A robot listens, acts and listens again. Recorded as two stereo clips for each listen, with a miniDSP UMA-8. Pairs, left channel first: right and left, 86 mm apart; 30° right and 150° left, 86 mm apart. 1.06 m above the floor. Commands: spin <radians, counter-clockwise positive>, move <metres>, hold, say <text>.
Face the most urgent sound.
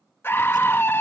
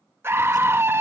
spin -2.62
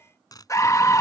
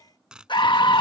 spin -0.70
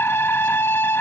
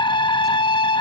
spin -0.52
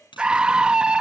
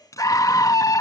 spin 0.17
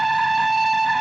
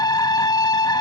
say Found it: a scream, straight ahead.